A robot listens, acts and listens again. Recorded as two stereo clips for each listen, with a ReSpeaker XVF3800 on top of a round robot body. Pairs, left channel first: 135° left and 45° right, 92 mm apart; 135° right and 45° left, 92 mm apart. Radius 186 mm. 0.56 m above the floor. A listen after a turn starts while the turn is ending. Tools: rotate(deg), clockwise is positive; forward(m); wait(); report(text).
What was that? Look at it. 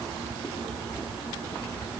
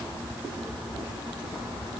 wait()
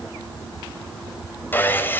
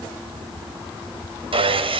rotate(-65)
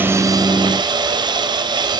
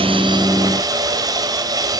report("Facing the sawing, 2 to 4 m away.")